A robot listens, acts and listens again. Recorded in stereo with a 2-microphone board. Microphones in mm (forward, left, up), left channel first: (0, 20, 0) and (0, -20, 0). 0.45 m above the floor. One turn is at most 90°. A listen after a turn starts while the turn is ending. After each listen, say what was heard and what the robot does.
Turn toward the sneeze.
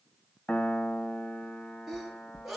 Turn 30° left.
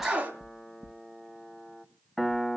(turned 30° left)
So it is at 30° right. Turn 30° right.
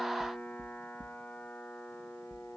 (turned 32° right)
I heard a sneeze from this way, but can't make it out now.